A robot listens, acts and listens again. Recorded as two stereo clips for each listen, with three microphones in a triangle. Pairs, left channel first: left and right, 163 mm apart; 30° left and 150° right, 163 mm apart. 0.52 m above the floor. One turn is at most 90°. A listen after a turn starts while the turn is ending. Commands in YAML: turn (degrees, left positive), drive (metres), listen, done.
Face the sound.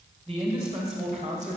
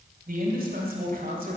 turn: -90
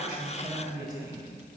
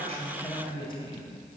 turn: -25
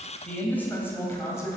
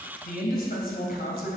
turn: 20
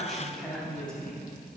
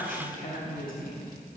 turn: 10
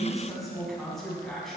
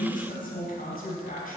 done: "Found it: a man speaking, straight ahead."